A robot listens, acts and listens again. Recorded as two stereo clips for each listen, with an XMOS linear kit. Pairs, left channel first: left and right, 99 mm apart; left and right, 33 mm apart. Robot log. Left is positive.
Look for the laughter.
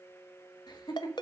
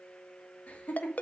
note: The laughter: about 45° left or 135° left.
cmd yaw +45
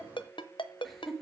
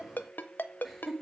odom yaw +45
end: Facing the laughter.